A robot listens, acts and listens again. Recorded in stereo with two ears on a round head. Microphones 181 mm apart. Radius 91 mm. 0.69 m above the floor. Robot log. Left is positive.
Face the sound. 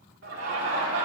note: The laughter: about 70° right or 110° right.
cmd yaw -70
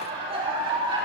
note: So it is at 25° right.
cmd yaw -25
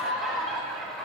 end: Facing the laughter, 2 to 4 m away.